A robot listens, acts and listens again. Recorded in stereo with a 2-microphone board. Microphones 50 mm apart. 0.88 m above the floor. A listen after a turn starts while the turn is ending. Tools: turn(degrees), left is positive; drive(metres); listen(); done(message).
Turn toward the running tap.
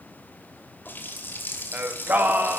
turn(degrees=40)
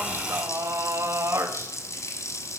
turn(degrees=100)
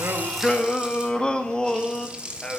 turn(degrees=-20)
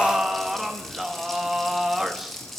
done("Found it: a running tap, straight ahead, 2 to 4 m away.")